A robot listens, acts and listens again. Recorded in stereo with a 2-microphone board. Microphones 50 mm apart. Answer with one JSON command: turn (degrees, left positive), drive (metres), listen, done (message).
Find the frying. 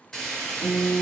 {"turn": 30}
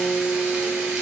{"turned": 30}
{"listen": true}
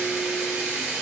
{"turn": -15}
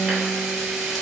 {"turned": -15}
{"done": "Facing the frying, 1 to 2 m away."}